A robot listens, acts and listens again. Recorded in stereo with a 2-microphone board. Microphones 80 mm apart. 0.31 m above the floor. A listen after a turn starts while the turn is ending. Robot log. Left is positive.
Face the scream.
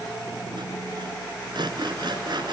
cmd idle
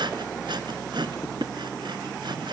cmd idle
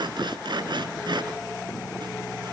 end: I can't make out a scream to turn to.